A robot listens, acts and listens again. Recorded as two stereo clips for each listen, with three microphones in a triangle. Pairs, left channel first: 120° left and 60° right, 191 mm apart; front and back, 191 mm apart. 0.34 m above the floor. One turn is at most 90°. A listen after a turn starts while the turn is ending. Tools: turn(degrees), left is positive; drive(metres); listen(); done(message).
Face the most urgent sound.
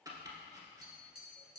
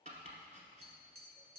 listen()
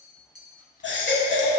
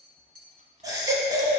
turn(degrees=90)
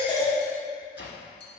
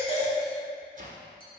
turn(degrees=20)
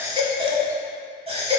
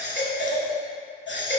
done("Facing the baby crying.")